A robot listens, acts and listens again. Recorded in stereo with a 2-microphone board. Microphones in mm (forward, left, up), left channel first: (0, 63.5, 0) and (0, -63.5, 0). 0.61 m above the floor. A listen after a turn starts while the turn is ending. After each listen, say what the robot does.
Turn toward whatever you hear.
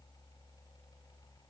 Keep listening.
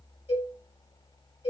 Turn 55° left.
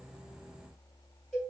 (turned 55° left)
Facing the cowbell.